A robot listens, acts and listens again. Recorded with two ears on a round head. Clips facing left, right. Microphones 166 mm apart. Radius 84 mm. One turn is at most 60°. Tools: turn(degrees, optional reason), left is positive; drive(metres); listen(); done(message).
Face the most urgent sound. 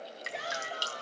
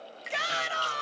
turn(degrees=-60)
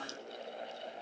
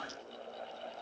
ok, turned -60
turn(degrees=-30, reason="Nothing new. It was at 30° right.")
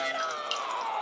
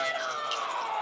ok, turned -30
done("Facing the shout.")